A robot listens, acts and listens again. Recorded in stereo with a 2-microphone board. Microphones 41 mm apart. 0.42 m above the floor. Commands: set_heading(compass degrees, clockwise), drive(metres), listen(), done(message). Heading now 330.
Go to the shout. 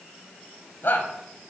set_heading(270)
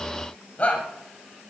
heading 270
set_heading(225)
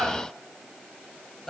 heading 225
set_heading(210)
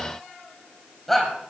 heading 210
drive(1.0)
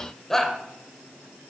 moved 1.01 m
set_heading(200)
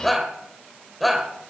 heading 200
drive(1.0)
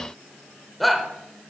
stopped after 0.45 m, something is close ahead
done("I am next to the shout.")